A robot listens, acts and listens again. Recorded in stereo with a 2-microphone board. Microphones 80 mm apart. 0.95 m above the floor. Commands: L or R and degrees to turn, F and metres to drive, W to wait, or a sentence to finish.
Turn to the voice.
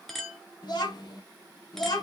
L60
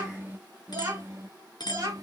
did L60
R45
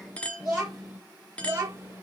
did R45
R30
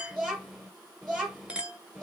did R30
Found it: a child speaking, straight ahead, 1 to 2 m away.